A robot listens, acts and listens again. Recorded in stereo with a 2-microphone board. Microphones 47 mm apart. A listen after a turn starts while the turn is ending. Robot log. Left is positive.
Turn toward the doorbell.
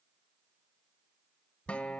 cmd idle
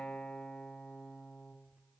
cmd idle
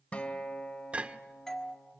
cmd yaw +30
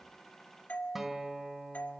note: So it is at 140° left.
cmd yaw +140
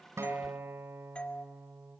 note: The doorbell is now 30° left.
cmd yaw +30
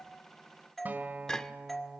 end: Facing the doorbell, 1 to 2 m away.